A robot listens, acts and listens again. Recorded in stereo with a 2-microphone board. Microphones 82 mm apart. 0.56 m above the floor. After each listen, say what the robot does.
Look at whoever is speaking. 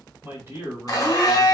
Turn 30° right.
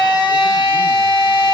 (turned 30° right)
Keep listening.
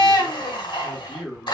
Facing the man speaking.